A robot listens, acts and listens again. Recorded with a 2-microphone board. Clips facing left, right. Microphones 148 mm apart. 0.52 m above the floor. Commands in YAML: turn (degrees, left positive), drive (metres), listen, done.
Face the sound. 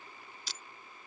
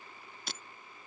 turn: -55
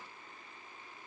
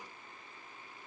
listen: true
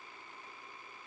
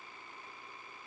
done: "I heard breaking glass, but can't make it out now. It was about straight ahead or 70° right."